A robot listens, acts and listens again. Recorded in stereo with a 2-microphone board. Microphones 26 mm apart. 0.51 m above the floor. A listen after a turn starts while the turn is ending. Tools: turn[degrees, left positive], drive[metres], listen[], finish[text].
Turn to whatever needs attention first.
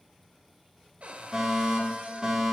Thought: The fire alarm: about 30° right or 150° right.
Action: turn[-30]
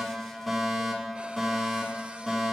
Action: finish[Facing the fire alarm.]